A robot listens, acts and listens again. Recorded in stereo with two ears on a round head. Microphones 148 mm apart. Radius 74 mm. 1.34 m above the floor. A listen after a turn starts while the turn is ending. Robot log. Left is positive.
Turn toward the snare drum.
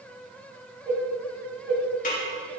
note: The snare drum: about 50° left or 130° left.
cmd yaw +50
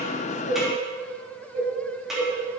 end: Found it: a snare drum, straight ahead.